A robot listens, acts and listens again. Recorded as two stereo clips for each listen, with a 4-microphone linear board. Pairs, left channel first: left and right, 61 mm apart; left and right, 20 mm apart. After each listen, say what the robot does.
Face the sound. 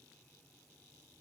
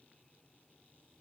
Keep listening.
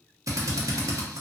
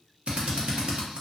Turn 70° right.
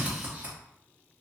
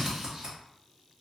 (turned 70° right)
Turn 25° right.
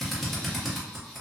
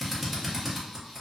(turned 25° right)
Facing the drill.